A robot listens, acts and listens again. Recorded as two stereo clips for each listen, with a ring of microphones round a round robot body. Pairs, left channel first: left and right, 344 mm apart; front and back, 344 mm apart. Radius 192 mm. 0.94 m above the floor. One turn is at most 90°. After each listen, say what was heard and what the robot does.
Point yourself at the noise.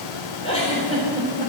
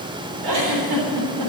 The giggle: 165° left. Turn 90° left.
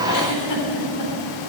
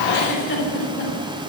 The giggle is now 55° left. Turn 55° left.
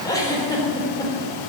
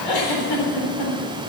The giggle is now 10° left. Turn 10° left.
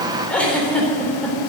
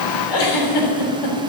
Facing the giggle, 2 to 4 m away.